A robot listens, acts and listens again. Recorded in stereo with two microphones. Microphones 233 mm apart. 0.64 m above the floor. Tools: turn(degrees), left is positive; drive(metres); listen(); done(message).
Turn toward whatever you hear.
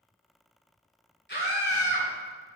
turn(degrees=50)
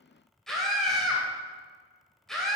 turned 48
done("Facing the scream, 2 to 4 m away.")